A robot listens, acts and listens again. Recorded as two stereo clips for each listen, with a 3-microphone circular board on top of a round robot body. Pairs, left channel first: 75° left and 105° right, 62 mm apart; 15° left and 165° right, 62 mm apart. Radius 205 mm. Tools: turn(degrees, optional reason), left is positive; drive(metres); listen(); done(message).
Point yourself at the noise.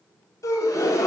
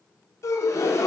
turn(degrees=50, reason="The gasp: 50° left.")
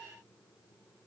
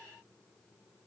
done("Facing where the gasp came from. I can't hear it now.")